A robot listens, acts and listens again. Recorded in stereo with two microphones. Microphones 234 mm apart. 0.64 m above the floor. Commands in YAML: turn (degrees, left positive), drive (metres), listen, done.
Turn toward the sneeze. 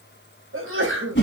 turn: -60
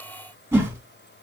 listen: true
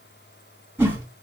done: "I heard a sneeze, but can't make it out now. It was about straight ahead or 60° right."